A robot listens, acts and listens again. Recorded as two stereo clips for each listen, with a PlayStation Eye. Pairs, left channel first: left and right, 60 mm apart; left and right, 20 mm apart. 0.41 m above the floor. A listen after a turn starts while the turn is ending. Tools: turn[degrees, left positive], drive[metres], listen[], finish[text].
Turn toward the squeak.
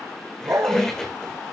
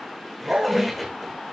Action: turn[30]
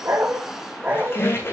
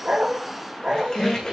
Thought: So it is at 140° left.
Action: turn[140]
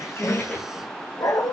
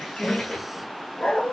Thought: The squeak is now 25° left.
Action: turn[25]
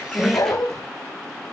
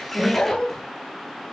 Action: listen[]
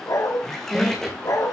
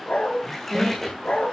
Action: finish[Facing the squeak.]